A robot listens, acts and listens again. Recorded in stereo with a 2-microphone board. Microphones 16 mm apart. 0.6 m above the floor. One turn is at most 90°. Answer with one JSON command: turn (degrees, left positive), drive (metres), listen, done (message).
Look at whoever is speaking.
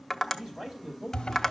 {"turn": -70}
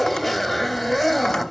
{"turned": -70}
{"listen": true}
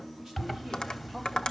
{"listen": true}
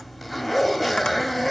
{"done": "I heard a man speaking, but can't make it out now. It was about straight ahead or 40° right."}